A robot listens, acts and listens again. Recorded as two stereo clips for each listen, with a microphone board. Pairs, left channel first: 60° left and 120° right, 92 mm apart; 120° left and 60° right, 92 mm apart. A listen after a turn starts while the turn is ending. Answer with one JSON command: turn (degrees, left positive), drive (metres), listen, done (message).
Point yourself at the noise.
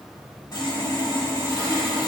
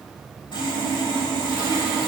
{"turn": 100}
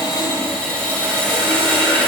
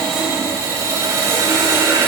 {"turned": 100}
{"turn": -10}
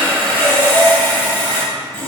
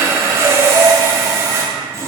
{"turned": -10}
{"done": "Found it: sawing, straight ahead."}